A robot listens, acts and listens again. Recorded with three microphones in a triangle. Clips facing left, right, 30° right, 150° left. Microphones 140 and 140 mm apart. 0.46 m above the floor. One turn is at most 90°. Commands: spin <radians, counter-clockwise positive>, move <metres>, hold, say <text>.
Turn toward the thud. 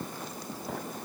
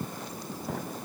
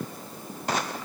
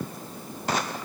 hold
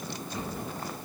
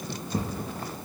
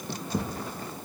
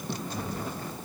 spin -0.70
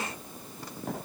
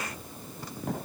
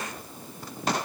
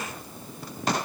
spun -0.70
say Facing where the thud came from. I can't hear it now.